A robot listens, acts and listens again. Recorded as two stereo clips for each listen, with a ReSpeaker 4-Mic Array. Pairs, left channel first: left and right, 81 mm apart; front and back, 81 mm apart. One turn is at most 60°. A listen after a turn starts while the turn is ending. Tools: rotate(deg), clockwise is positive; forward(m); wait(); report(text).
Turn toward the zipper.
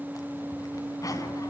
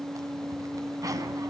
rotate(-60)
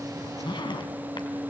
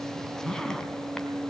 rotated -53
rotate(-60)
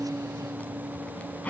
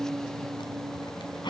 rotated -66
rotate(-15)
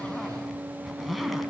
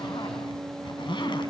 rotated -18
report("Facing the zipper, 2 to 4 m away.")